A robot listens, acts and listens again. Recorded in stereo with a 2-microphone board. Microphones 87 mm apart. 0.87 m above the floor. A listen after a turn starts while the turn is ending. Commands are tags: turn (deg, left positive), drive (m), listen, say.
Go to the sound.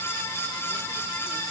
<listen/>
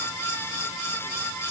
<listen/>
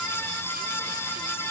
<say>I can't make out anything.</say>